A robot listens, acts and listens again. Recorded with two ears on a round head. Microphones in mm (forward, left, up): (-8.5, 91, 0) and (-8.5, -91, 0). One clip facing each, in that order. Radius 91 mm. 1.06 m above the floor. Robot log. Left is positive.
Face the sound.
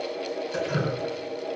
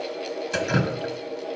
cmd yaw -90
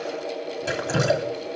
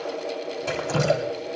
note: So it is at 10° left.
cmd yaw +10
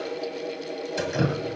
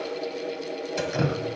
end: Facing the dripping, 1 to 2 m away.